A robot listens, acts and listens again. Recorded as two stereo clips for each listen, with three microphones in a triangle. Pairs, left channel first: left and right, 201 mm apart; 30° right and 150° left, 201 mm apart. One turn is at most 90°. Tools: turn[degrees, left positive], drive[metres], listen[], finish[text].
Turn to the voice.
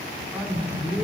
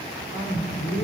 Thought: The man speaking: 10° right.
Action: turn[-10]
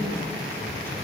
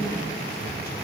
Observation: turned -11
Action: listen[]
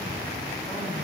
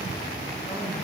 Action: listen[]
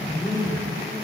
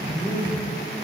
Thought: The man speaking is now 15° left.
Action: turn[15]
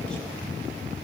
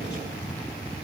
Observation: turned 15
Action: listen[]
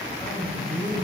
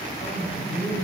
Action: finish[Facing the man speaking, over 4 m away.]